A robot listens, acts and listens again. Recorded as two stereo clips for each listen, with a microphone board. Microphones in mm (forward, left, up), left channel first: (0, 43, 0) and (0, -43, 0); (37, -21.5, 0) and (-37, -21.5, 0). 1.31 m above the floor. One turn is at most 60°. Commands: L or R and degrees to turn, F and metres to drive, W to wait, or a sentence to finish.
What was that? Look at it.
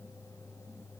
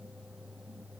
W
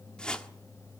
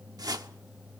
L60
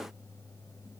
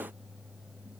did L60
L60
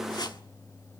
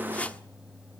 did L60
L60
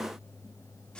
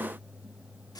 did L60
L10
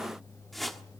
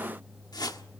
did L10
Found it: a whoosh, straight ahead, 1 to 2 m away.